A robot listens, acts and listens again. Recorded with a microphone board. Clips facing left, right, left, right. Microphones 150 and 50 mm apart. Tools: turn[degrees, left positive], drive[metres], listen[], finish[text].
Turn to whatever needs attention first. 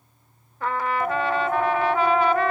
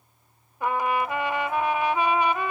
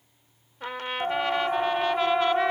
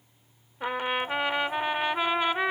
Thought: The siren: about 55° left or 125° left.
Action: turn[55]
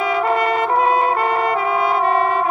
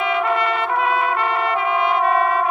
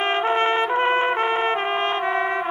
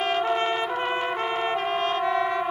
Action: finish[Found it: a siren, straight ahead.]